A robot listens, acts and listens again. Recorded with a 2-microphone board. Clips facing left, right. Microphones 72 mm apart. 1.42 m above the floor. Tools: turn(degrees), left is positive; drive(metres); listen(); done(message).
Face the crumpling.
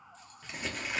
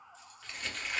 turn(degrees=30)
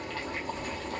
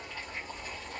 listen()
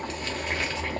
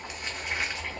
listen()
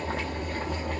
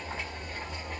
done("I heard crumpling, but can't make it out now. It was about 20° right or 140° left.")